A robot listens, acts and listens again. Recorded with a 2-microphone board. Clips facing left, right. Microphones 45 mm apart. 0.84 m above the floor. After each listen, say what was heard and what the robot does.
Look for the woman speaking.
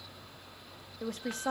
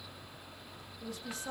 The woman speaking: about 55° left or 125° left. Turn 55° left.
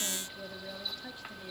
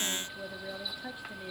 So it is at 20° right. Turn 20° right.
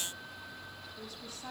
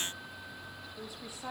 The woman speaking is now 20° right. Turn 20° right.
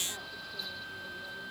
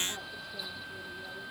Keep listening.
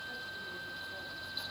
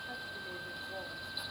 Keep listening.
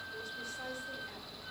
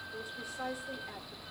The woman speaking is now 15° right. Turn 15° right.
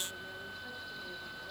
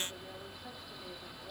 Keep listening.
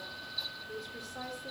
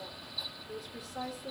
Found it: a woman speaking, straight ahead.